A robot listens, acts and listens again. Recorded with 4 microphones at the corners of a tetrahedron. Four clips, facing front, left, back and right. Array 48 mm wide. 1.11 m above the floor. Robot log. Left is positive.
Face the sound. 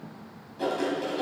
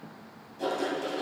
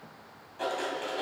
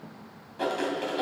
note: The writing: 115° right.
cmd yaw -115
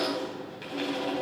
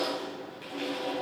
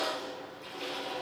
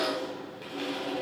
end: Found it: writing, straight ahead, 2 to 4 m away.